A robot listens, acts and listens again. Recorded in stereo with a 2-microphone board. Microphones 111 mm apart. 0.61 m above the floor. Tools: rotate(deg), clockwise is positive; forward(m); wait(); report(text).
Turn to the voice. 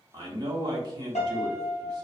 rotate(35)
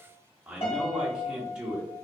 rotate(10)
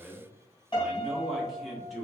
report("Facing the man speaking, 1 to 2 m away.")